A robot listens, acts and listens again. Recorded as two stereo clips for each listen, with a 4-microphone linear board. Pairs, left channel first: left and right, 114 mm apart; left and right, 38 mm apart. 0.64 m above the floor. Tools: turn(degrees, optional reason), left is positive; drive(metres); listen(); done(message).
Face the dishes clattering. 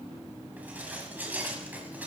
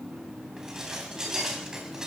turn(degrees=-30)
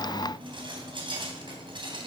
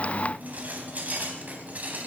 turn(degrees=-135, reason="So it is at 135° right.")
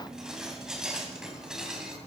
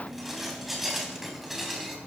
done("Found it: dishes clattering, straight ahead, 2 to 4 m away.")